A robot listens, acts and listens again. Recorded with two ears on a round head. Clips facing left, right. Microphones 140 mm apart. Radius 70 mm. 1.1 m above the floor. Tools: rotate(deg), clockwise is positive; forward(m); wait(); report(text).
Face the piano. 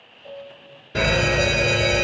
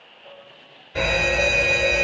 rotate(-30)
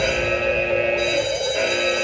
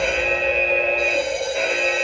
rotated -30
wait()
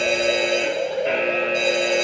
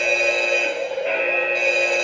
wait()
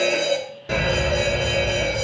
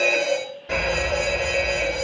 report("I heard a piano, but can't make it out now. It was about straight ahead or 120° left.")